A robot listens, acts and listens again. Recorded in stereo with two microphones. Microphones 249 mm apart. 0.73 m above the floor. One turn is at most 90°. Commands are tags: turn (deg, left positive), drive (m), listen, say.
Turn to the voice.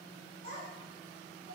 <turn deg="-90"/>
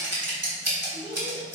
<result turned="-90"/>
<turn deg="-25"/>
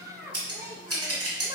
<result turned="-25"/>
<turn deg="-20"/>
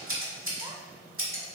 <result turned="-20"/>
<listen/>
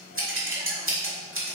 <listen/>
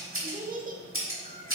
<turn deg="-35"/>
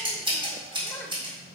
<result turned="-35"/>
<listen/>
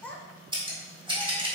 <say>Facing the child speaking.</say>